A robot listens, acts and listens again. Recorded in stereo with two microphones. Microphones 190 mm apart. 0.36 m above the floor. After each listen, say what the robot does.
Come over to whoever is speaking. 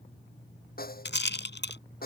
Keep listening.
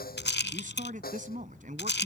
Turn 45° right.
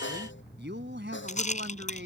Turn 90° right.
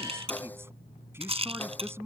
Turn 15° right.
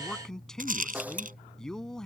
Drive 1.0 m forward.
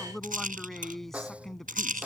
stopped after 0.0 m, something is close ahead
Something is in my way. I am facing the man speaking but have not reached it.